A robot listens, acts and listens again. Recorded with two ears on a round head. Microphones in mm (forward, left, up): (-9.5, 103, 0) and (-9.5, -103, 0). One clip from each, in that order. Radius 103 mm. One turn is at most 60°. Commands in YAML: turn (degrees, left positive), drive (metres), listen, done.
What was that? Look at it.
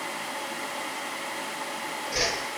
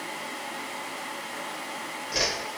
turn: -30
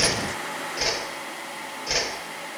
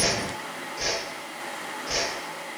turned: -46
turn: 30
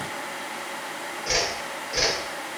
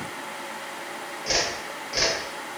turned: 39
done: "Found it: a whoosh, straight ahead."